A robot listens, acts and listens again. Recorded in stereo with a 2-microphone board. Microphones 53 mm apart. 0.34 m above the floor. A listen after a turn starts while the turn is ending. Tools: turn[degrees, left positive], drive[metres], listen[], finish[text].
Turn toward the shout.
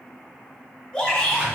Thought: The shout: about 15° left or 165° left.
Action: turn[15]
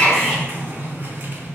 Action: finish[Facing the shout, 1 to 2 m away.]